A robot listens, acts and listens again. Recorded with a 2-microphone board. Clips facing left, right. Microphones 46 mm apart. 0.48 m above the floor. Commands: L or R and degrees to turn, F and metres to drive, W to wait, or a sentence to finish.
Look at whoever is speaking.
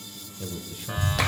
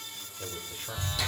R15
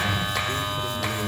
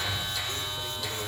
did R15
Found it: a man speaking, straight ahead, 1 to 2 m away.